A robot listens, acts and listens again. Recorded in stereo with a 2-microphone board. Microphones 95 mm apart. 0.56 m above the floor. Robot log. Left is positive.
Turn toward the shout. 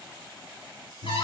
cmd idle
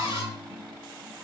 cmd idle
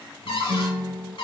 end: I can't make out a shout, only a guitar and a cupboard door.